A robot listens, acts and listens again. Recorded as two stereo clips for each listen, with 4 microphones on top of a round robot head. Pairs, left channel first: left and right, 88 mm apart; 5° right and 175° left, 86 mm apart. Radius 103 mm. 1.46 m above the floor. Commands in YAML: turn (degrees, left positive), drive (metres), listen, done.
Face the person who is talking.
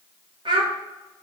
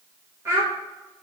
turn: -120
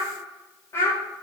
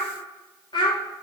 turn: 30
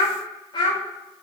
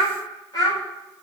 turn: 40
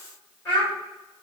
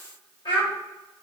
turn: 10
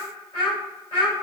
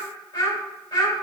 turn: 15
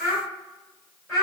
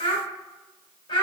done: "Found it: a child speaking, straight ahead."